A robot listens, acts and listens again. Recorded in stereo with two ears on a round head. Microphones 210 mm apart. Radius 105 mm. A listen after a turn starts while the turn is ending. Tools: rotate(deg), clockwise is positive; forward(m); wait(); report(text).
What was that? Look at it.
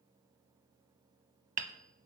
rotate(35)
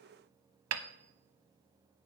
rotate(110)
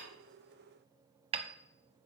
rotate(25)
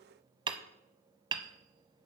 rotate(20)
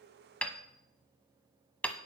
report("Facing the hammering.")